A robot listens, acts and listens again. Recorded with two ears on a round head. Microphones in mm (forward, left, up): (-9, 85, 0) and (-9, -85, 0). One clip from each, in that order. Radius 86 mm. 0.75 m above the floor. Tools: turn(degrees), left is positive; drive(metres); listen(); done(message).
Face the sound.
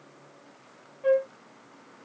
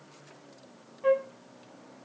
turn(degrees=-30)
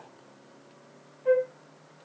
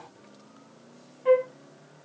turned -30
turn(degrees=-140)
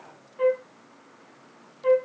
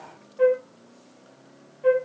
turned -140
done("Found it: a flute, straight ahead.")